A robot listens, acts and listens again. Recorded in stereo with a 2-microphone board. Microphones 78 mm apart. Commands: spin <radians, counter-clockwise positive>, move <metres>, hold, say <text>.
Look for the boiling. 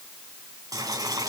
spin -0.87
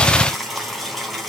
say Facing the boiling, 2 to 4 m away.